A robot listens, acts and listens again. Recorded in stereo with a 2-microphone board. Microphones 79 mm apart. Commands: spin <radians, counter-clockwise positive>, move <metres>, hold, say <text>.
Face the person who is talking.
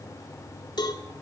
hold
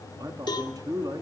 spin -0.87
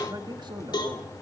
spin -1.31
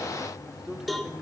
spin -0.17
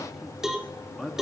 say Facing the man speaking.